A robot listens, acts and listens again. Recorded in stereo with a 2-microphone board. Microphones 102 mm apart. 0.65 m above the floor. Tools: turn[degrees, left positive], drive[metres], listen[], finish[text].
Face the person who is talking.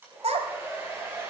Action: turn[-90]
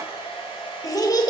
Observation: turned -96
Thought: So it is at 40° left.
Action: turn[40]
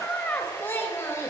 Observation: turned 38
Thought: The child speaking is now 30° left.
Action: turn[30]
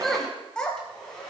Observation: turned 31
Thought: The child speaking is now 10° left.
Action: turn[10]
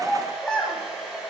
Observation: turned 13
Thought: The child speaking is now 10° left.
Action: turn[10]
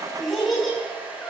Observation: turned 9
Action: finish[Facing the child speaking, 2 to 4 m away.]